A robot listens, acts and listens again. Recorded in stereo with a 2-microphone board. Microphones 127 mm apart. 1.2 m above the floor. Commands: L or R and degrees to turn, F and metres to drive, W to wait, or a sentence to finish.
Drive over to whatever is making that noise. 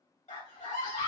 L90
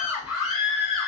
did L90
F1.0
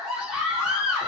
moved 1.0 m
R10
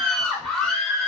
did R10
F1.0
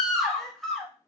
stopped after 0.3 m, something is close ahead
I am next to the scream.